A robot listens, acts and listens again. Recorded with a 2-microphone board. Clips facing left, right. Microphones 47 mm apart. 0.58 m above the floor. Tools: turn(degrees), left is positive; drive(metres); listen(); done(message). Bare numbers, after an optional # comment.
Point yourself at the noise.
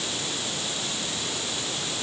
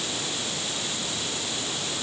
listen()
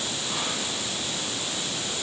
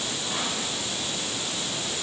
listen()
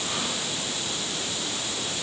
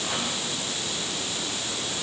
done("I can't make out anything to turn to.")